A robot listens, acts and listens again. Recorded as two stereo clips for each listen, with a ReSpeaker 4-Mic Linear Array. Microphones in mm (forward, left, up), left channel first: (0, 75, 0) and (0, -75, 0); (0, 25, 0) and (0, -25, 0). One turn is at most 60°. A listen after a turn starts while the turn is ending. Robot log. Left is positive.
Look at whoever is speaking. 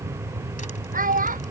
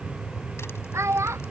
note: The child speaking: about 65° right or 115° right.
cmd yaw -60
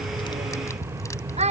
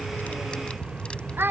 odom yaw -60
note: So it is at 45° right.
cmd yaw -45
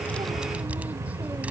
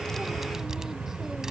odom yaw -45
cmd idle
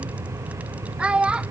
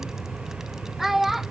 end: Found it: a child speaking, straight ahead.